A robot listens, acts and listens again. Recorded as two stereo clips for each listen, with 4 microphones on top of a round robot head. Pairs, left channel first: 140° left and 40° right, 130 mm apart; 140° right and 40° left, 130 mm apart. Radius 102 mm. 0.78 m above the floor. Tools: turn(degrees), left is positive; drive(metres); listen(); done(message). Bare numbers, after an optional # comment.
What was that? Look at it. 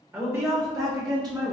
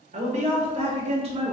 # The woman speaking: 10° left.
turn(10)
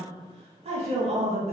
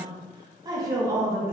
# The woman speaking is now 30° right.
turn(-30)
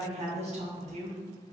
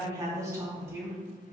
# The woman speaking is now 30° right.
turn(-30)
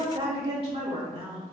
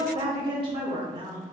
# The woman speaking is now 10° right.
turn(-10)
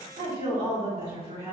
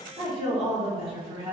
done("Facing the woman speaking.")